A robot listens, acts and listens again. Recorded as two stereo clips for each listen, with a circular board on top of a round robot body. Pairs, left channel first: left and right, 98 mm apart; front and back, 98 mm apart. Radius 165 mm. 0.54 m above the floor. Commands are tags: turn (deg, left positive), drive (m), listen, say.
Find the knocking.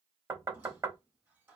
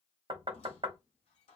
<turn deg="-145"/>
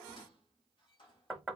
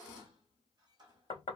<say>Facing the knocking.</say>